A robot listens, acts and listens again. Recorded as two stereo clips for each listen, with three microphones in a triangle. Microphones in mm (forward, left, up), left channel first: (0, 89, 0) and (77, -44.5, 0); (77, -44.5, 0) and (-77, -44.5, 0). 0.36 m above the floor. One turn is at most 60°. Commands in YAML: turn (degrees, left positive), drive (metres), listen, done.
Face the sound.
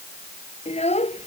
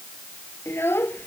turn: 60
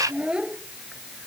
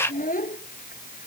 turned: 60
turn: 25
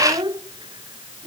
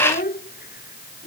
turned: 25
done: "Found it: a child speaking, straight ahead."